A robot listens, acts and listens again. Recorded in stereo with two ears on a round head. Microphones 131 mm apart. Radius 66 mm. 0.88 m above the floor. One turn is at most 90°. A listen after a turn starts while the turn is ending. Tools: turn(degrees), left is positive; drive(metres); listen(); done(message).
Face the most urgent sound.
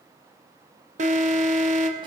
turn(degrees=-55)
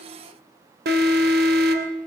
turn(degrees=-70)
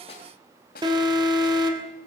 turn(degrees=-30)
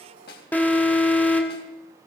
turn(degrees=10)
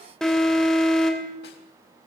done("Found it: an alarm, straight ahead.")